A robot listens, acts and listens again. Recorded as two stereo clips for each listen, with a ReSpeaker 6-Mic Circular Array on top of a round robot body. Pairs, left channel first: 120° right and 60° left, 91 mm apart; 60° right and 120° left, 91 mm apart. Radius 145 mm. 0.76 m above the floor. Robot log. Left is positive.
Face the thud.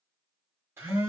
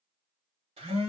cmd idle
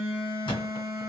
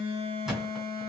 note: The thud: 160° right.
cmd yaw -160
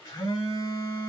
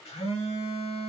end: Facing where the thud came from. I can't hear it now.